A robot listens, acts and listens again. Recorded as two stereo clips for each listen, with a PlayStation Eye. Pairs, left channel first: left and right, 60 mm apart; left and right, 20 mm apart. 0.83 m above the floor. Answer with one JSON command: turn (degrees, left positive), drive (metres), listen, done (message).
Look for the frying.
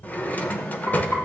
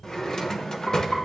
{"turn": 70}
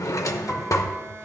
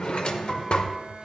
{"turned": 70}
{"listen": true}
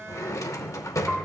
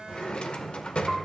{"turn": 35}
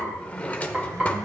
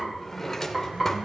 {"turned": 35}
{"turn": -15}
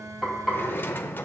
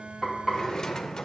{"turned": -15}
{"done": "Facing the frying."}